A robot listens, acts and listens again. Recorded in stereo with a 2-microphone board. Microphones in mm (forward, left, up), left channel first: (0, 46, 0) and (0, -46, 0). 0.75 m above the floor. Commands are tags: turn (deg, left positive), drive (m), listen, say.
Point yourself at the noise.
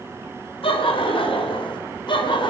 <turn deg="60"/>
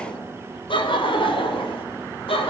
<turn deg="75"/>
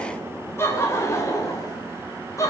<turn deg="35"/>
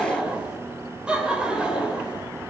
<turn deg="-10"/>
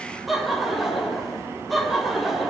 <say>Found it: laughter, straight ahead.</say>